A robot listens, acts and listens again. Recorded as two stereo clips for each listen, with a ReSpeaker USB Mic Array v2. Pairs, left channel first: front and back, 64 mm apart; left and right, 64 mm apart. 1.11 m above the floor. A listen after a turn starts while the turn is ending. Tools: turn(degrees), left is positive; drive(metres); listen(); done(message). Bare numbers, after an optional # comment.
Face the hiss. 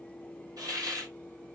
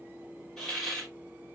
# The hiss: 170° left.
turn(170)
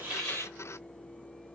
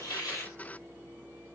listen()
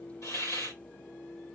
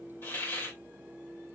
# The hiss is now 35° left.
turn(35)
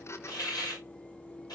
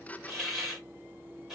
# The hiss is now 10° right.
turn(-10)
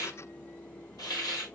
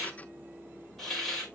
done("Facing the hiss.")